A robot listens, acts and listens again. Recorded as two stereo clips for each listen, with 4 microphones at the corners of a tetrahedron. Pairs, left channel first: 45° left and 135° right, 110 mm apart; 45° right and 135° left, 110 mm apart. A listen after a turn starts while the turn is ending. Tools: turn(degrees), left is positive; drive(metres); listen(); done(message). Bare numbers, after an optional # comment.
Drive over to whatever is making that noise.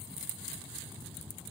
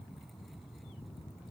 listen()
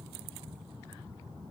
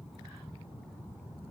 listen()
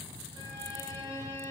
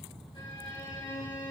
# The violin: 85° right.
turn(-85)
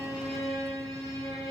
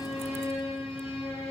# The violin is now 15° right.
turn(-15)
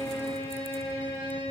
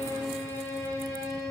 drive(1.0)
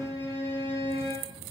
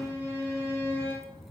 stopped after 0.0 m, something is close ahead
# The violin is now 10° left.
turn(10)
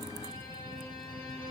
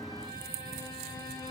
listen()
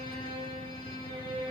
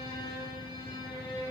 done("Blocked. The violin is further on, straight ahead.")